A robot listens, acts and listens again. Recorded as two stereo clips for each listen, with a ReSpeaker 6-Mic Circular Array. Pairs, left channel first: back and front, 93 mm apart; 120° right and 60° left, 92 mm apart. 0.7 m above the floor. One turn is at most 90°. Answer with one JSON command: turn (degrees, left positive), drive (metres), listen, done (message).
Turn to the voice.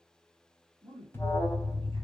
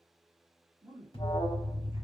{"turn": 10}
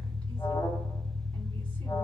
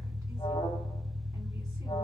{"listen": true}
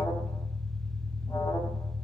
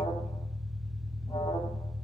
{"listen": true}
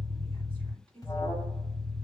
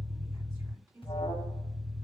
{"done": "Facing the woman speaking."}